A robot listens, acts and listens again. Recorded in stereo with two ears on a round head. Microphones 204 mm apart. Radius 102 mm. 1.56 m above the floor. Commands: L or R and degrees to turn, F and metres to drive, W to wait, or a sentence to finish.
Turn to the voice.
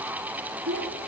R55
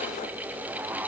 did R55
W
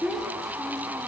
Found it: a child speaking, straight ahead, 2 to 4 m away.